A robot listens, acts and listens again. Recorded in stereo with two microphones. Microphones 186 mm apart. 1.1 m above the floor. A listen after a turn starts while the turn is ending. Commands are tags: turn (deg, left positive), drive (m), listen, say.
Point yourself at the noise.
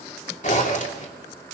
<turn deg="40"/>
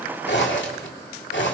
<turn deg="95"/>
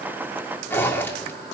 <turn deg="10"/>
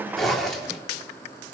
<say>Found it: a zipper, straight ahead.</say>